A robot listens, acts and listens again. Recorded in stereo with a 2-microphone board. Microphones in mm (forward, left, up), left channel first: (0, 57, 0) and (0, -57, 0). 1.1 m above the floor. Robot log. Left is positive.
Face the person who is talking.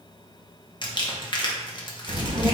note: The child speaking: about 45° right or 135° right.
cmd yaw -45
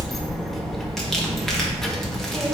end: Found it: a child speaking, straight ahead, under 1 m away.